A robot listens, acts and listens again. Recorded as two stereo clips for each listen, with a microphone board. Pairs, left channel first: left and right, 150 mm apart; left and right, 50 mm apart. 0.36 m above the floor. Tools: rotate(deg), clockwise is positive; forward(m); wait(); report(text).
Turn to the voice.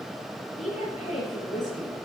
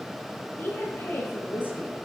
rotate(-50)
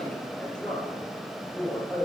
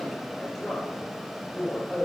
report("Found it: a woman speaking, straight ahead.")